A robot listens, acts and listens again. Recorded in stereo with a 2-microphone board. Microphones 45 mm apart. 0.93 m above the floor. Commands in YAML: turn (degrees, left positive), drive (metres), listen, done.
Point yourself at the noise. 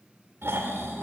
turn: -60
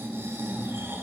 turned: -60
turn: -60
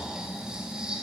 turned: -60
turn: -20
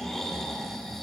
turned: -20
done: "Facing the snoring."